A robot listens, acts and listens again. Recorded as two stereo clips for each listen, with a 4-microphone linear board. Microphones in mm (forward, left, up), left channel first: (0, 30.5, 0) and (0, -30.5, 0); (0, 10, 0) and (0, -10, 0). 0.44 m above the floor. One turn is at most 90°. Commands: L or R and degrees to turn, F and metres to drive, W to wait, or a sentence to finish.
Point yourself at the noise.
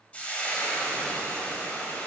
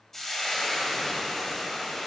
L25
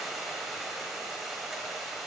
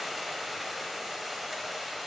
Found it: frying, straight ahead.